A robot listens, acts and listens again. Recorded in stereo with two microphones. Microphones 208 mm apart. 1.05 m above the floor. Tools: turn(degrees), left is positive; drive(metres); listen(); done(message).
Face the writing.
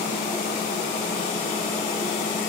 listen()
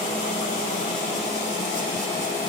listen()
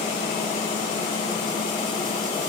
done("I can't make out writing to turn to.")